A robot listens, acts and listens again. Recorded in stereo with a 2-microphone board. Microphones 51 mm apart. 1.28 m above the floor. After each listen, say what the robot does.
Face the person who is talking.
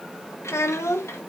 Turn 70° left.
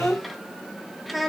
Facing the child speaking.